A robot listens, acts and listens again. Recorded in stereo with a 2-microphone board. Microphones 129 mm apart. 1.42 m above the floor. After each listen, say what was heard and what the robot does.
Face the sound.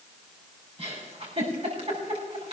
The giggle: about 50° right or 130° right. Turn 50° right.
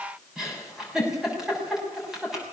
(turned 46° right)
Facing the giggle, over 4 m away.